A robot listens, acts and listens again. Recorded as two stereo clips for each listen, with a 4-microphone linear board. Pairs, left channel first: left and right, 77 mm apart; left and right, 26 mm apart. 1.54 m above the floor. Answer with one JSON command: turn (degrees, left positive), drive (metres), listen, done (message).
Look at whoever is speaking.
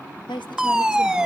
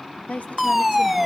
{"turn": 90}
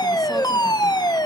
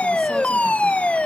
{"listen": true}
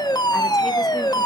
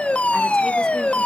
{"listen": true}
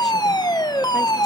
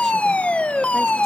{"done": "I heard a woman speaking from this way, but can't make it out now."}